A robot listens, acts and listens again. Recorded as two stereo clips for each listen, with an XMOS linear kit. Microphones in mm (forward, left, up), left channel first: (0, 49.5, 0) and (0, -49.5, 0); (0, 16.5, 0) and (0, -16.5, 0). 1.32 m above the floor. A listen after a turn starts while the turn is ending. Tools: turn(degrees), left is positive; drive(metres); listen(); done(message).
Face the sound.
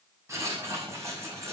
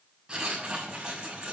turn(degrees=-30)
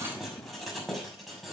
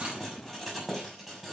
done("Facing the writing, over 4 m away.")